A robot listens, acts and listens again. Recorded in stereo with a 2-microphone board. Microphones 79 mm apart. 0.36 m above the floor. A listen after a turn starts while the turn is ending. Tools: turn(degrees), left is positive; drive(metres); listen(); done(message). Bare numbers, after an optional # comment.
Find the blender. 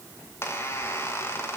listen()
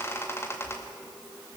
listen()
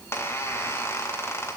done("I can't make out a blender to turn to.")